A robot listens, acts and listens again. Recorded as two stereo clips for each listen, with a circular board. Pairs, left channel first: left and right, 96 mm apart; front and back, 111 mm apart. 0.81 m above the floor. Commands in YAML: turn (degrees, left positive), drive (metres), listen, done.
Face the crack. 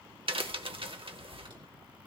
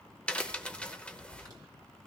turn: -80
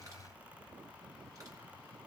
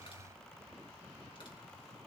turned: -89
turn: 10
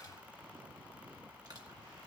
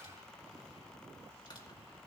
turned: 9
done: "Facing where the crack came from. I can't hear it now."